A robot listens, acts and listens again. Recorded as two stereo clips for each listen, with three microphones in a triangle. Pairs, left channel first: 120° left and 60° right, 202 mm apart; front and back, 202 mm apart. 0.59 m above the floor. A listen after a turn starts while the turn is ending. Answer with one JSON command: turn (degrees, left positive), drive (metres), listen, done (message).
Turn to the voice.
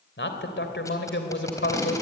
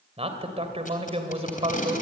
{"turn": 125}
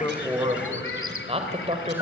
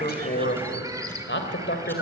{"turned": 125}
{"done": "Facing the man speaking, 2 to 4 m away."}